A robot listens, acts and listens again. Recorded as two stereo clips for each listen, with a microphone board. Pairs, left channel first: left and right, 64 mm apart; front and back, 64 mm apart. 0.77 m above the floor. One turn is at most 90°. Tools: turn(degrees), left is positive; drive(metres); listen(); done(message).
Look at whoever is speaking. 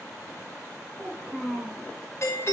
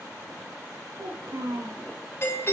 turn(degrees=-90)
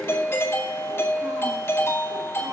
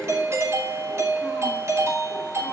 turn(degrees=-80)
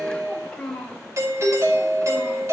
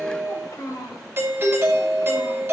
turn(degrees=15)
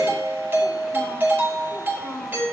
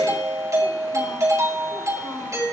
listen()
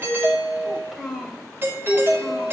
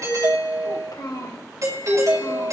done("Facing the child speaking, 2 to 4 m away.")